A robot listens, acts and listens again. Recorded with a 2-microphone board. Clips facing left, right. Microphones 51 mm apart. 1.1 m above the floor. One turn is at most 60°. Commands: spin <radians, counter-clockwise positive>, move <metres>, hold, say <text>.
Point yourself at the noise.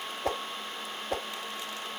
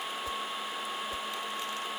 spin 1.05
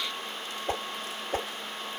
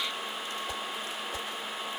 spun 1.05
spin 0.87
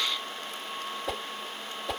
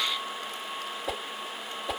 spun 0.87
say Facing the whoosh.